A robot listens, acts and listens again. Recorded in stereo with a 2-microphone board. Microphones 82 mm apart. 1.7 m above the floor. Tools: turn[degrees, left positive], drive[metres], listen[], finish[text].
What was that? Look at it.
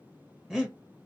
Action: turn[-30]
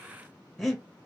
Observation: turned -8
Action: turn[30]
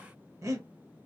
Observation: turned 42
Thought: So it is at 45° right.
Action: turn[-45]
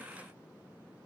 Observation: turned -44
Action: listen[]
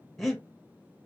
Action: finish[Found it: breathing, straight ahead.]